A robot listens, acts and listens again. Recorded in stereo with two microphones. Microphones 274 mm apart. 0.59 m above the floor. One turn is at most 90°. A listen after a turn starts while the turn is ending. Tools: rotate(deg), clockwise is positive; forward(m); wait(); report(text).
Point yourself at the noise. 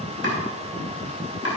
rotate(-60)
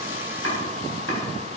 rotate(-60)
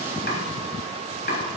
rotate(-45)
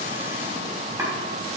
rotate(10)
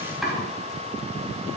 report("Found it: chopping, straight ahead, over 4 m away.")